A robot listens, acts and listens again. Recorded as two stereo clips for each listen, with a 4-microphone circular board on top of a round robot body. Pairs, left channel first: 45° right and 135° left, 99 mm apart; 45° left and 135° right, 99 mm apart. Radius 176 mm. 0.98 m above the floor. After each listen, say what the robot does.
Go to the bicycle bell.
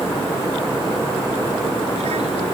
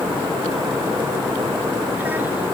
Keep listening.
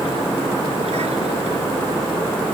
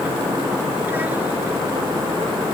Keep listening.
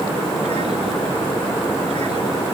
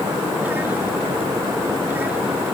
I can't make out a bicycle bell to turn to.